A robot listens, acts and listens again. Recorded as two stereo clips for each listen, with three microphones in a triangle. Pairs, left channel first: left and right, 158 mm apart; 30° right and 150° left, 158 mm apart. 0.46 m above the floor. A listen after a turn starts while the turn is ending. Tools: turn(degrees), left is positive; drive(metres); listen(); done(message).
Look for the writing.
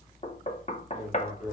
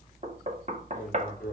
turn(degrees=50)
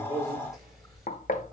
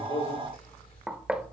listen()
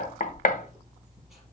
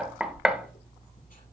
done("Found it: writing, straight ahead.")